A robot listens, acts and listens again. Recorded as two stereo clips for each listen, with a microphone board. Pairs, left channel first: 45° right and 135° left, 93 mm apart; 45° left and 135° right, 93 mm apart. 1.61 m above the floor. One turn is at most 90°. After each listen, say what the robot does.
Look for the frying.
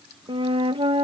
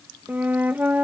Keep listening.
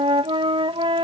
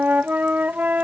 Keep listening.
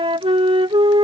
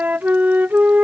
I can't make out frying, only a flute.